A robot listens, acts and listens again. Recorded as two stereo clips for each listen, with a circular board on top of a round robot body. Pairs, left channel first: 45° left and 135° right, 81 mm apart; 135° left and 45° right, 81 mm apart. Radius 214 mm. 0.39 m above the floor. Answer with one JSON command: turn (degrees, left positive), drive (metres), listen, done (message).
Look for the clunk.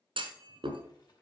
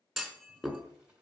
{"turn": -135}
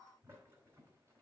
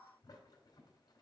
{"done": "Facing where the clunk came from. I can't hear it now."}